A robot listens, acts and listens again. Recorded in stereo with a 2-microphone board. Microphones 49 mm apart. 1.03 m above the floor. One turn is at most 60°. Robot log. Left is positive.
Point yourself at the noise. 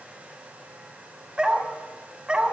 note: The dog barking: about 20° right or 160° right.
cmd yaw -20
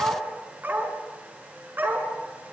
note: So it is at 140° right.
cmd yaw -60
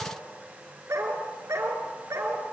note: The dog barking is now 80° right.
cmd yaw -60
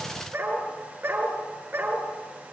note: The dog barking is now 50° right.
cmd yaw -50
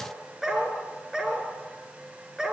note: The dog barking is now 10° right.
cmd yaw -10
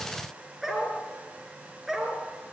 end: Found it: a dog barking, straight ahead.